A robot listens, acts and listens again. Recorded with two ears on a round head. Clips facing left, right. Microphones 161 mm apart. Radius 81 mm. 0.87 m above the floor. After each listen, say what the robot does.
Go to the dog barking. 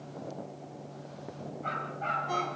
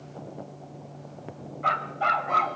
Turn 90° right.
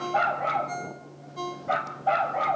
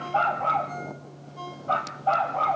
Turn 15° left.
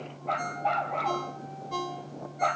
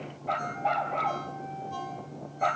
Drive 1.0 m forward.
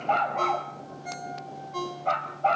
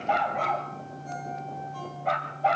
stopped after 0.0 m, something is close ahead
Something is in my way. I am facing the dog barking but have not reached it.